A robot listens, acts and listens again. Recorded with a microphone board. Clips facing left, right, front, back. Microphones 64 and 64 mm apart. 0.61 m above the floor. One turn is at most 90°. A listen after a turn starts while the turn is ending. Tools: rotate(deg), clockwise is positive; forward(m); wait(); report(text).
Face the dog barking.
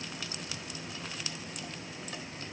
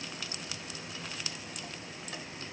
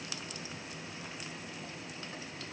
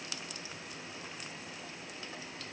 wait()
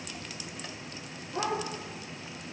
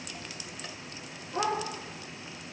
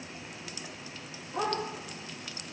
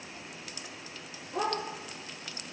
rotate(-90)
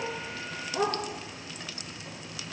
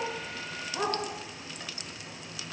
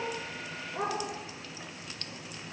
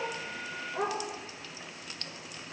rotate(-80)
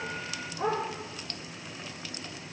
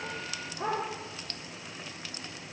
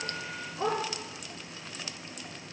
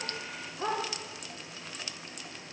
report("Facing the dog barking, over 4 m away.")